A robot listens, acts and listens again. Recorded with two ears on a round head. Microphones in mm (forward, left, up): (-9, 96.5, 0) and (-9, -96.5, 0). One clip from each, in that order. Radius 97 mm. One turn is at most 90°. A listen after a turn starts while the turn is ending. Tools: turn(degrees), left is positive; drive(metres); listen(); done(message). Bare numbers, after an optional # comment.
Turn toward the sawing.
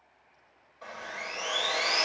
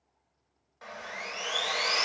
# The sawing: about 45° right or 135° right.
turn(-45)
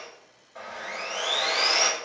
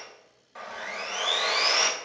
# So it is at 85° right.
turn(-85)
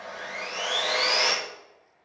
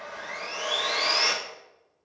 done("Found it: sawing, straight ahead.")